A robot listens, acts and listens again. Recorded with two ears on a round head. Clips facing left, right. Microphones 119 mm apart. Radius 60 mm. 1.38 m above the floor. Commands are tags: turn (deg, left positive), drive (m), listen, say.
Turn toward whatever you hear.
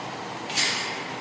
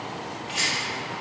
<turn deg="50"/>
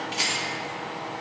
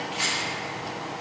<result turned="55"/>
<turn deg="65"/>
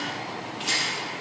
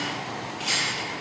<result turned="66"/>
<say>Found it: a rattle, straight ahead.</say>